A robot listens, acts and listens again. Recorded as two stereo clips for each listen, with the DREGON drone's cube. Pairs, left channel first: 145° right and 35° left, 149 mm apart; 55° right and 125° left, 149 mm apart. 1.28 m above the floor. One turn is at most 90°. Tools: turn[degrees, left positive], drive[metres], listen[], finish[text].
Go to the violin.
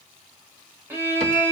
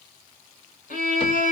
Thought: The violin: 40° right.
Action: turn[-40]
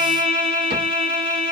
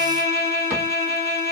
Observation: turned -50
Thought: The violin is now 10° left.
Action: turn[10]
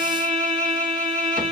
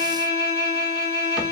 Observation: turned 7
Action: drive[1.0]
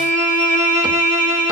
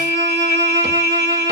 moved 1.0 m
Thought: The violin is now 15° left.
Action: turn[15]
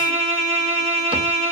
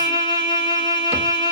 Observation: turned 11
Action: drive[1.0]
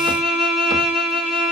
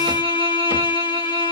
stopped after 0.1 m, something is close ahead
Action: finish[Arrived at the violin, straight ahead.]